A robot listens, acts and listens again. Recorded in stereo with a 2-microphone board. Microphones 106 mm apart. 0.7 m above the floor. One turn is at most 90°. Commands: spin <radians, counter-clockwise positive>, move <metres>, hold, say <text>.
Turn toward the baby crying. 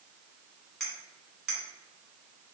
hold
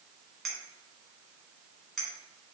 hold
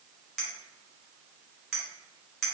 say I can't make out a baby crying to turn to.